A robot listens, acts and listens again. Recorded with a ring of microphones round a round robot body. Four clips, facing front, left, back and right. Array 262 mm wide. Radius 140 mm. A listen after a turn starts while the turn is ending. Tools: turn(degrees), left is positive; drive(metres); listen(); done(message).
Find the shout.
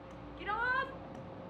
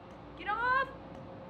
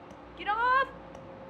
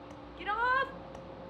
turn(degrees=175)
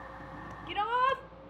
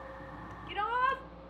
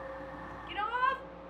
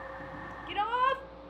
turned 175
turn(degrees=-45)
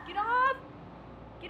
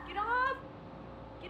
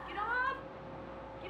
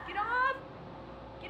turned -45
turn(degrees=-10)
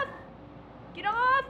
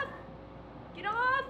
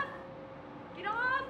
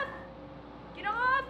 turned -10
done("Found it: a shout, straight ahead.")